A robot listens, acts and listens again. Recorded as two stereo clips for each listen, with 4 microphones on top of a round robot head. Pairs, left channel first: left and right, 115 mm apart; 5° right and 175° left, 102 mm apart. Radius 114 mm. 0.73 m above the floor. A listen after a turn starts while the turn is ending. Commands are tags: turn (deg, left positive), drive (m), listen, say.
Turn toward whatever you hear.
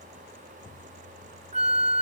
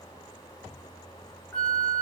<turn deg="-85"/>
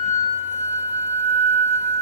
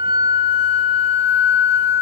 <turn deg="-15"/>
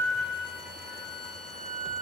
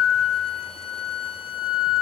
<say>Found it: a flute, straight ahead.</say>